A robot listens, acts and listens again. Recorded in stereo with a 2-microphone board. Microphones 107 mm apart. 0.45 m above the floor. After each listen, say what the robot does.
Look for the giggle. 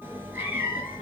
Keep listening.
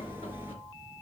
Keep listening.
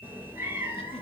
I can't make out a giggle, only a cat meowing.